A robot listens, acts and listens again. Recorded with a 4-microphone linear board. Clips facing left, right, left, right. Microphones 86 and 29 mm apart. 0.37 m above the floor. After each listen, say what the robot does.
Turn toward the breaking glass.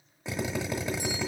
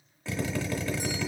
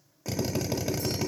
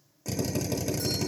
Keep listening.
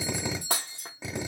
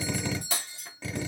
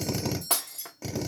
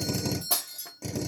Turn 75° left.
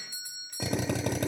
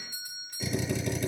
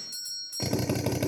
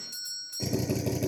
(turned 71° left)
Keep listening.
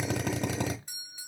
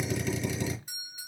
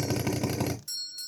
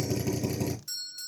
I heard breaking glass, but can't make it out now. It was about 5° left or 35° left.